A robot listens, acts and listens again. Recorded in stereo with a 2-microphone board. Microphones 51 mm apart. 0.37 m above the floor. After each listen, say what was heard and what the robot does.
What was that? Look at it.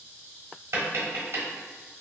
The tapping: about 60° right or 120° right. Turn 60° right.
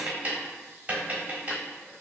So it is at 40° right. Turn 40° right.
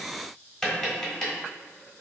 The tapping is now 10° left. Turn 10° left.
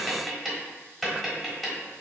Facing the tapping.